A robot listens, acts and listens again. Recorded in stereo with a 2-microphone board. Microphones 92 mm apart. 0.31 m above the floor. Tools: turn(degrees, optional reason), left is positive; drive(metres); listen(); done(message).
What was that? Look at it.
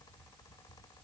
listen()
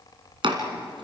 turn(degrees=-70, reason="The chopping: about 70° right or 110° right.")
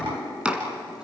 turn(degrees=-15, reason="So it is at 15° right.")
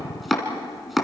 done("Facing the chopping.")